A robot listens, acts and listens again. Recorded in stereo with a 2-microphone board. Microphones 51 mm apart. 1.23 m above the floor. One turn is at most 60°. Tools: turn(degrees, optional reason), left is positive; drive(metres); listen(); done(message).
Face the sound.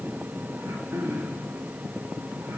turn(degrees=-60, reason="The throat clearing: about 60° right or 120° right.")
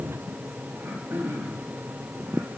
turn(degrees=-60, reason="So it is at 60° right.")
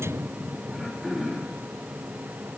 done("Facing the throat clearing, 2 to 4 m away.")